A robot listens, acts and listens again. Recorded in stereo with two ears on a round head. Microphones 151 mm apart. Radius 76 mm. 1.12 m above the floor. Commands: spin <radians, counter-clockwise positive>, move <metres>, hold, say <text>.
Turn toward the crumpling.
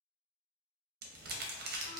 spin -1.05
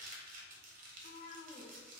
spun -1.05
spin -0.96
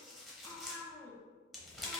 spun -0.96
say Found it: crumpling, straight ahead.